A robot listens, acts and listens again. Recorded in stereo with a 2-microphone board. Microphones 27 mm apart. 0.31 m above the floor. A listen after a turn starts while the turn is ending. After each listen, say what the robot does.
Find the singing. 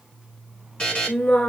Turn 75° left.
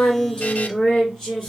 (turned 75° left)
Found it: singing, straight ahead.